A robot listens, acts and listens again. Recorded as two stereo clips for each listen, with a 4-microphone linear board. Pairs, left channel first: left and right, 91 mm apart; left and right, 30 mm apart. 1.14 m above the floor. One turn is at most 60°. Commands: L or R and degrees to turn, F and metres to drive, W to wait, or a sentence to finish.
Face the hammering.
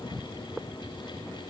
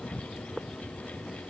W
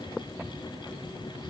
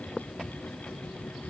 W
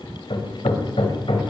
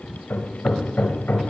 L60
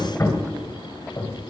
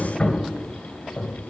L35
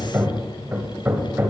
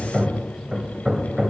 R25
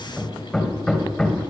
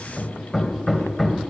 Found it: hammering, straight ahead, 2 to 4 m away.